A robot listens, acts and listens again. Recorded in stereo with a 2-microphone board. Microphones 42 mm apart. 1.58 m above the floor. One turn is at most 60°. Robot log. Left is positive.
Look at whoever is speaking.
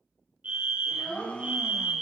cmd yaw +30
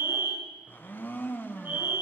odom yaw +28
cmd idle
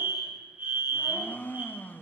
cmd idle
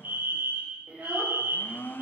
note: So it is at 40° right.
cmd yaw -40
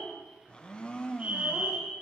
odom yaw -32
note: The child speaking is now 10° right.
cmd yaw -10
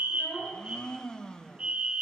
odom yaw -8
end: Facing the child speaking.